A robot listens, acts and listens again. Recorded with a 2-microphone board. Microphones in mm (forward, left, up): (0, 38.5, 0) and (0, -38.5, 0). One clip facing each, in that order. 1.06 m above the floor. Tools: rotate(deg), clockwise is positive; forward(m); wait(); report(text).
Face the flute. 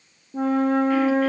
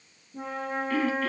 rotate(-90)
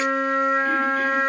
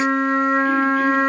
report("Found it: a flute, straight ahead, under 1 m away.")